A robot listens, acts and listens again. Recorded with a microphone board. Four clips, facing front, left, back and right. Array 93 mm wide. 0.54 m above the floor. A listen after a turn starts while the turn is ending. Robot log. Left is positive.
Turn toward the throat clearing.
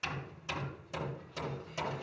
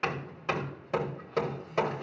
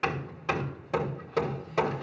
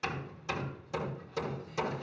cmd idle
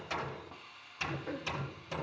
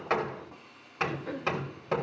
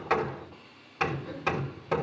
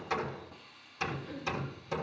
note: The throat clearing: 60° left.
cmd yaw +60
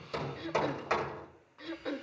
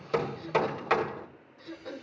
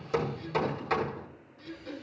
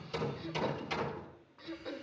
end: Found it: throat clearing, straight ahead.